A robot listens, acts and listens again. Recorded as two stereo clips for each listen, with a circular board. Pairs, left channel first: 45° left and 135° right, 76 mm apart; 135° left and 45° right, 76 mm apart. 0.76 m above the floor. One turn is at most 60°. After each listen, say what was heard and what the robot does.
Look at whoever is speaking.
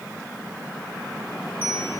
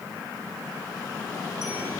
Keep listening.
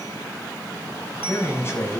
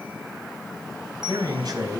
The man speaking: 10° right. Turn 10° right.
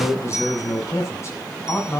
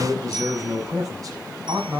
The man speaking is now 10° right. Turn 10° right.
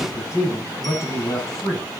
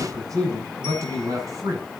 Facing the man speaking, over 4 m away.